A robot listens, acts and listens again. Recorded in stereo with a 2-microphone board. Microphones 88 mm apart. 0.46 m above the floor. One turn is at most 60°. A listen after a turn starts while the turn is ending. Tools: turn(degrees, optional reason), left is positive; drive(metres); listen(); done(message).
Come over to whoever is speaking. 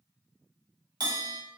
listen()
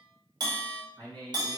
turn(degrees=-55, reason="The man speaking: about 55° right or 125° right.")
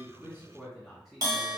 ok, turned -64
drive(metres=1.0)
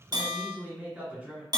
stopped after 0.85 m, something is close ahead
turn(degrees=-20, reason="The man speaking is now 20° right.")
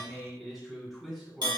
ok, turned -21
done("Arrived at the man speaking, straight ahead.")